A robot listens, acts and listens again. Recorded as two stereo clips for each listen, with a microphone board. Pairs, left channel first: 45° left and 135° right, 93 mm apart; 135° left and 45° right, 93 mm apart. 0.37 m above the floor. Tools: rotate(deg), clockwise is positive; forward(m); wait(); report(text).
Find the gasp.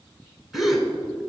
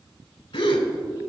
rotate(-135)
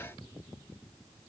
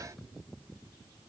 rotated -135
report("Facing where the gasp came from. I can't hear it now.")